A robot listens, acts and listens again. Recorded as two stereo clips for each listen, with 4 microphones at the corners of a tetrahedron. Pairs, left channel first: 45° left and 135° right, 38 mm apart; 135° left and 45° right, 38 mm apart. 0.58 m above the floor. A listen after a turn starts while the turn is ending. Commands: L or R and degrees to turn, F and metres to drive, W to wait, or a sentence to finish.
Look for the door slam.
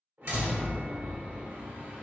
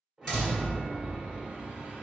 R150
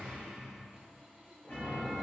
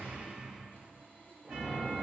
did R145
Facing where the door slam came from. I can't hear it now.